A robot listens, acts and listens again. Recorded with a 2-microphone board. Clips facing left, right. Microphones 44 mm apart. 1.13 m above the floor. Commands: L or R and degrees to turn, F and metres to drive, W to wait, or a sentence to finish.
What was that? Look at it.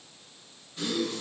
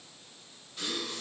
L30
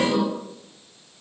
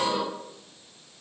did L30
R30
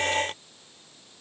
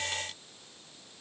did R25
I heard a gasp from this way, but can't make it out now.